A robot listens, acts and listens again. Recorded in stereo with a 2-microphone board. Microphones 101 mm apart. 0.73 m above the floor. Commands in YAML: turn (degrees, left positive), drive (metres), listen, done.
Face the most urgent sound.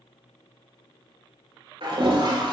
listen: true
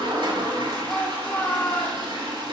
turn: 30
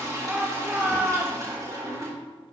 turn: -15
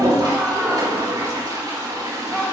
done: "Found it: a shout, straight ahead, 1 to 2 m away."